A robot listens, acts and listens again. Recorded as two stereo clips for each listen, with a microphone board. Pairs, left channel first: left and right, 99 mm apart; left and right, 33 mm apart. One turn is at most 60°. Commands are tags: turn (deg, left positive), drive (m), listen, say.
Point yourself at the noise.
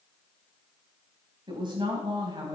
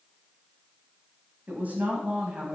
<turn deg="-45"/>
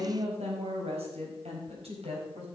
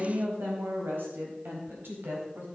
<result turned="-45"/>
<turn deg="-60"/>
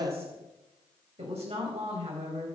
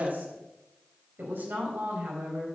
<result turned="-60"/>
<turn deg="-60"/>
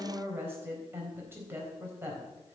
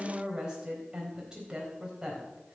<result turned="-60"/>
<turn deg="-20"/>
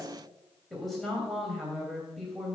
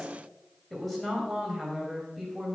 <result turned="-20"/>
<say>Found it: a woman speaking, straight ahead, 2 to 4 m away.</say>